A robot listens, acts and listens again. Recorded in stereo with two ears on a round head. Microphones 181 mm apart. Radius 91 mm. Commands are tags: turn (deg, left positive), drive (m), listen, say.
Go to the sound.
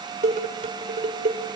<turn deg="-40"/>
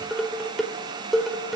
<drive m="1.0"/>
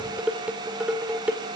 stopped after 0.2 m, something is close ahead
<say>Something is in my way. I am facing the dishes clattering but have not reached it.</say>